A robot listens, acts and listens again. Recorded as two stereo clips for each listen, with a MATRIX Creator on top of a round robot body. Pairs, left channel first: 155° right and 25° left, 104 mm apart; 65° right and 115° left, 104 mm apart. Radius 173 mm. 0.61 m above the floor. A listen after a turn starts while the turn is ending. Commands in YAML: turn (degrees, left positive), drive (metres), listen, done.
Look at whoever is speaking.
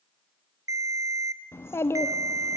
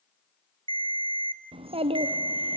turn: 135
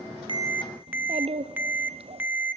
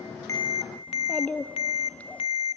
turn: 10
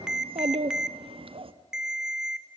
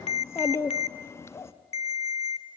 done: "Found it: a child speaking, straight ahead."